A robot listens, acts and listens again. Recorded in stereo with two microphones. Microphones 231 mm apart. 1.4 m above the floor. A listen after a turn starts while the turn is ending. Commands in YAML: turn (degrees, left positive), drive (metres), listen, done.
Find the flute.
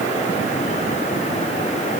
listen: true
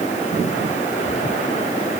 listen: true
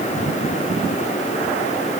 done: "I can't make out a flute to turn to."